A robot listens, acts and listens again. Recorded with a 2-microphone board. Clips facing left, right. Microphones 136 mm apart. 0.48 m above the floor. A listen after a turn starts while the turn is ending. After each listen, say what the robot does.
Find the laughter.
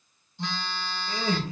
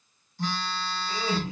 Turn 55° left.
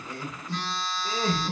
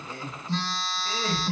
Turn 30° left.
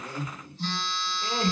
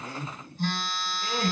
Turn 35° left.
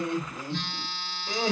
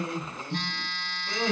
Turn 20° left.
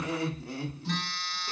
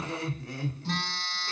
Found it: laughter, straight ahead.